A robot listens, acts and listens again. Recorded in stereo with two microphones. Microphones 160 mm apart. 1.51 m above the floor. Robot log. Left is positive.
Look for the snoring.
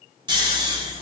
note: The snoring: about 30° right or 150° right.
cmd yaw -30
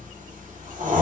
note: So it is at 125° right.
cmd yaw -125
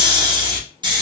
note: The snoring is now 30° right.
cmd yaw -30
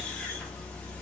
cmd idle
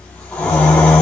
note: The snoring is now 10° left.
cmd yaw +10
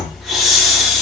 end: Facing the snoring, under 1 m away.